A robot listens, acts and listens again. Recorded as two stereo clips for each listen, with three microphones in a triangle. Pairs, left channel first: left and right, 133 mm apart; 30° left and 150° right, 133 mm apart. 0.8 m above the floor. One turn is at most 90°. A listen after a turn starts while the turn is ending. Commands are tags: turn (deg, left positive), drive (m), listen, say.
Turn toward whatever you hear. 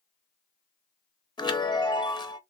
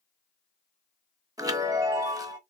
<turn deg="90"/>
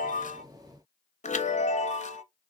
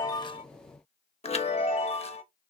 <turn deg="65"/>
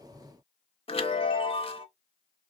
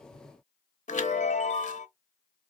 <turn deg="50"/>
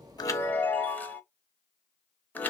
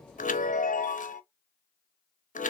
<turn deg="15"/>
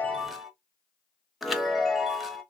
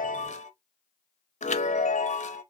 <say>Facing the chime, under 1 m away.</say>